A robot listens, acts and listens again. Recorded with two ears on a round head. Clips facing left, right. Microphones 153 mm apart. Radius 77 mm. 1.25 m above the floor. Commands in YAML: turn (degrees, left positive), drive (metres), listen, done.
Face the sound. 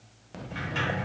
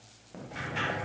turn: 60
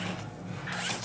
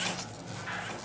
done: "Facing the sliding door."